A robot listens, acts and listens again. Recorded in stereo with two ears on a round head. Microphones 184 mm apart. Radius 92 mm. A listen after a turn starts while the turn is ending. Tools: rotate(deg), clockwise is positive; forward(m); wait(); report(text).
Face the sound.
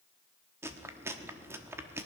rotate(30)
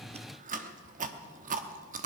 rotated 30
rotate(140)
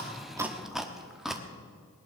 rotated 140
report("Found it: chewing, straight ahead, 1 to 2 m away.")